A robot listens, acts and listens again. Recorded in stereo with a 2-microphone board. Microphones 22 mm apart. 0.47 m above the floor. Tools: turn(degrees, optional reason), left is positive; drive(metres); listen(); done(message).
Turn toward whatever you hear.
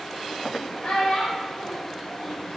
turn(degrees=40, reason="The child speaking: about 40° left or 140° left.")
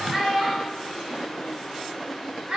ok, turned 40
turn(degrees=-45, reason="So it is at 45° right.")
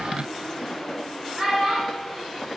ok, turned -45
turn(degrees=-35, reason="The child speaking is now 35° right.")
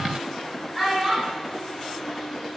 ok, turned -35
turn(degrees=-10, reason="The child speaking is now 10° right.")
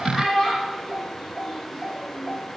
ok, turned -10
done("Facing the child speaking.")